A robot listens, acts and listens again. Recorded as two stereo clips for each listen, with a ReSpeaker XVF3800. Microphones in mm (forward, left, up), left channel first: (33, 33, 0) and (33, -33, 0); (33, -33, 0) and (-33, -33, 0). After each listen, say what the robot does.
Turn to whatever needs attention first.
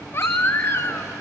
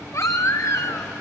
Turn 40° left.
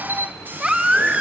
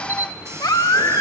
Turn 15° right.
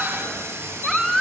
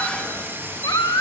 Found it: a baby crying, straight ahead, 1 to 2 m away.